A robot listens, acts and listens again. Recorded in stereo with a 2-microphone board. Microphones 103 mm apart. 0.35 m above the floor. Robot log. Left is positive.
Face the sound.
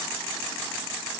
cmd idle
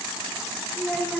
cmd yaw +30
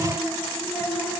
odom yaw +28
cmd yaw +30
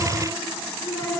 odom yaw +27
note: So it is at 155° left.
cmd yaw +155
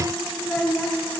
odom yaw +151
note: The child speaking is now 10° left.
cmd yaw +10
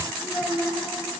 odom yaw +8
end: Found it: a child speaking, straight ahead.